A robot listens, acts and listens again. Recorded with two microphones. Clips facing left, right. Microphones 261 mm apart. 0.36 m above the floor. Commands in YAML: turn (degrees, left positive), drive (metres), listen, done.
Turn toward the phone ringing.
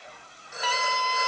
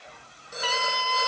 turn: -40
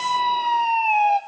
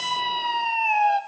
listen: true
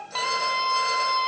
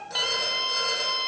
listen: true
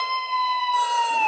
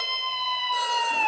done: "I heard a phone ringing, but can't make it out now. It was about straight ahead or 100° right."